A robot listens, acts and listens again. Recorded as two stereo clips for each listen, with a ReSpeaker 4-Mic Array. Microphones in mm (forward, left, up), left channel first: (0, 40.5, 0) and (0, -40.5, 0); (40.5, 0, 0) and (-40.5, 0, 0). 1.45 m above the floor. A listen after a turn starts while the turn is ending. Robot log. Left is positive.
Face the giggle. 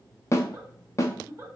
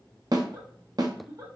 note: The giggle: 140° right.
cmd yaw -140
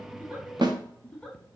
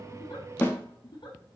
note: The giggle is now 10° left.
cmd yaw +10
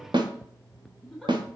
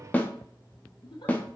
end: Found it: a giggle, straight ahead, under 1 m away.